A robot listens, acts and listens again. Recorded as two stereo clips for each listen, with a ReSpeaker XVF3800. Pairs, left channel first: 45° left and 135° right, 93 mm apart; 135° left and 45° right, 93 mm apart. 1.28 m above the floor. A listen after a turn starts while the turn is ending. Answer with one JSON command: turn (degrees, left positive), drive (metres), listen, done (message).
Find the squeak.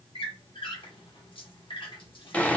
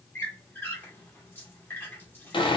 {"turn": 70}
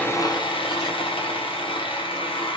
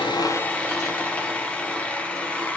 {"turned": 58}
{"turn": 10}
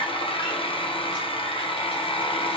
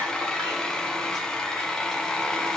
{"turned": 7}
{"listen": true}
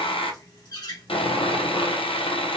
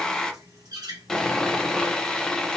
{"done": "Facing the squeak, 1 to 2 m away."}